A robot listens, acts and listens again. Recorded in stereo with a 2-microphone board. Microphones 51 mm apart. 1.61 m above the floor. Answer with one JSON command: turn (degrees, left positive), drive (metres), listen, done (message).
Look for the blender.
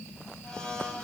{"turn": 15}
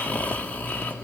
{"listen": true}
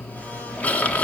{"listen": true}
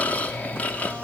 {"done": "I heard a blender, but can't make it out now. It was about straight ahead or 150° left."}